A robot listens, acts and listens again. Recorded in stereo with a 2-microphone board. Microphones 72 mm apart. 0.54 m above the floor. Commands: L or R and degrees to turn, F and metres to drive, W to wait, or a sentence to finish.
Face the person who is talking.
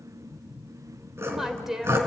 R30
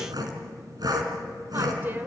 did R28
R145
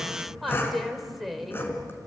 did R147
Facing the woman speaking, 2 to 4 m away.